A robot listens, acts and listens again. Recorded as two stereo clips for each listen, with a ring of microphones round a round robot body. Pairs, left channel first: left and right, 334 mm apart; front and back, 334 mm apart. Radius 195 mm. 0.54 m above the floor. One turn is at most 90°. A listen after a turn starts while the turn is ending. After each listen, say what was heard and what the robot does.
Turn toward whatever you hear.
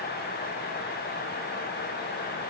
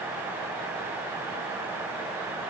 Keep listening.
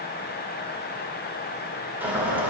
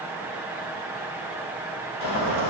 Facing the boiling, over 4 m away.